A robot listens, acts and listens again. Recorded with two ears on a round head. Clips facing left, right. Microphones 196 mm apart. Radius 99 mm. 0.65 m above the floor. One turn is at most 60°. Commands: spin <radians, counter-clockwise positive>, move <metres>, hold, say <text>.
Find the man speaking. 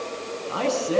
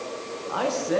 spin 0.52
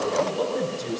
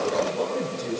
say Found it: a man speaking, straight ahead, over 4 m away.